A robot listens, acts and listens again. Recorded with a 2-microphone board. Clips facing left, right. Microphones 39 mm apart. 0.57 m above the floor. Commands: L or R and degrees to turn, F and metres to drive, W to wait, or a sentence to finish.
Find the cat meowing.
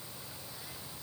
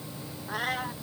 R65
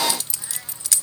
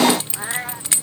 R50
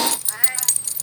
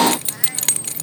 W
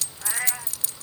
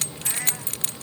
L20
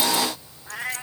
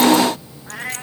R10
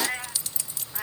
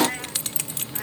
Found it: a cat meowing, straight ahead.